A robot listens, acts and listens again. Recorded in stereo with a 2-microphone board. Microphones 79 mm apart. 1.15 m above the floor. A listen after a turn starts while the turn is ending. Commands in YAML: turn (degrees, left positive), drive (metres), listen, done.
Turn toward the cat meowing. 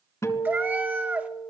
turn: -20
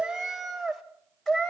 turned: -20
done: "Found it: a cat meowing, straight ahead, 2 to 4 m away."